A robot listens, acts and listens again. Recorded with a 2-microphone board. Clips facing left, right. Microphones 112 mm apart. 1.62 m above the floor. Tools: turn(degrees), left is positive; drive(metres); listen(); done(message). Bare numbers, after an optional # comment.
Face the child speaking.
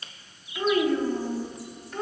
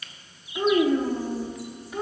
turn(-30)
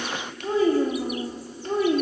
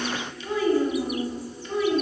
# So it is at 45° left.
turn(45)
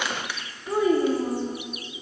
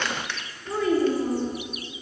# The child speaking is now 20° left.
turn(20)
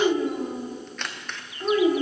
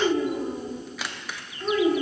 # The child speaking is now 10° left.
turn(10)
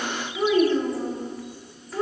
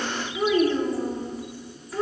done("Found it: a child speaking, straight ahead, 2 to 4 m away.")